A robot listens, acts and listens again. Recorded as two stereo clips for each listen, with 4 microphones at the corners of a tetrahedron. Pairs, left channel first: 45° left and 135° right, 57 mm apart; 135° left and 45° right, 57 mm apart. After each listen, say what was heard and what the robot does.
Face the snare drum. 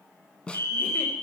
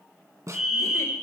The snare drum: 25° right. Turn 25° right.
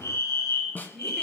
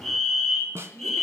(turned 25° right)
The snare drum is now 10° right. Turn 10° right.
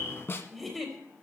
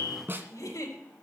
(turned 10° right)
Found it: a snare drum, straight ahead.